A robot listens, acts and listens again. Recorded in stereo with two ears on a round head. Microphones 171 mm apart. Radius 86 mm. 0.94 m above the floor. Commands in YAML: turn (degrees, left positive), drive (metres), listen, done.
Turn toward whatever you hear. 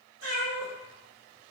turn: -65
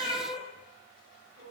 turn: -55
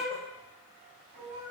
turn: -45
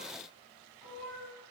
done: "Found it: a cat meowing, straight ahead, 1 to 2 m away."